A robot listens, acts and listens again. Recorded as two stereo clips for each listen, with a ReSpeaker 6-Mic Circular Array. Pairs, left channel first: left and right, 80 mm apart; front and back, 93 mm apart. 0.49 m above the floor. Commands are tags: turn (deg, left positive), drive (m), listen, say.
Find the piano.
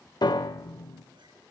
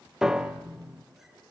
<turn deg="95"/>
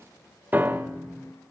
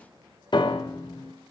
<turn deg="-25"/>
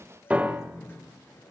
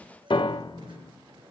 <turn deg="-20"/>
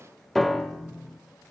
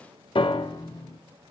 <say>Facing the piano.</say>